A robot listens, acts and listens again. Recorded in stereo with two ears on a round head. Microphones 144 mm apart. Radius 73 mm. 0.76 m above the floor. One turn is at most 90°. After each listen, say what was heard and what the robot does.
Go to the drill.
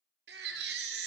Keep listening.
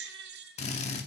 The drill: about 45° left or 135° left. Turn 45° left.
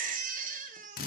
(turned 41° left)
So it is at 90° left. Turn 90° left.
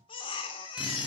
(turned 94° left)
Keep listening.
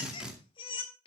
Drive 1.0 m forward.
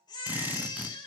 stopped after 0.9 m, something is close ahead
The drill is now 15° right. Turn 15° right.
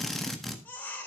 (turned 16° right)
I am next to the drill.